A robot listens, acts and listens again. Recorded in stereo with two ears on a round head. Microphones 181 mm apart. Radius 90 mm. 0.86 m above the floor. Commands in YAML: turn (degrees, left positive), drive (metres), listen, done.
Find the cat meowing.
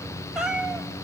turn: -30
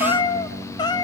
turn: 20
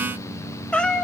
done: "Facing the cat meowing, 1 to 2 m away."